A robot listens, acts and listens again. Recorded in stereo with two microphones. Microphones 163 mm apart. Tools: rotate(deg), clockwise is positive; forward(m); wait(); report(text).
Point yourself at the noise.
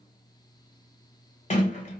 rotate(-45)
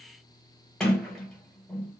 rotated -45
report("Facing the sliding door, 1 to 2 m away.")